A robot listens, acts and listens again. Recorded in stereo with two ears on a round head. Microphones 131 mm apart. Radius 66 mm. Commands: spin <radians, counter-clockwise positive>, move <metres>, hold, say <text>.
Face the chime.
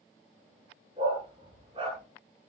hold
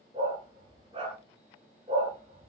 hold
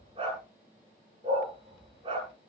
say I can't make out a chime to turn to.